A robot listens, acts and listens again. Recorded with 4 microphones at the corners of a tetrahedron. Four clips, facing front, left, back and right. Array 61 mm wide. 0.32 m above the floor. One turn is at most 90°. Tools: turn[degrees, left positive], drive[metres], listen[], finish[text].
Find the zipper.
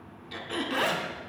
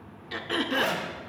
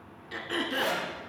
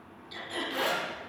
Thought: The zipper: 25° left.
Action: turn[25]
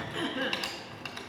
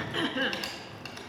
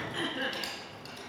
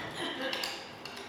Action: finish[Facing the zipper.]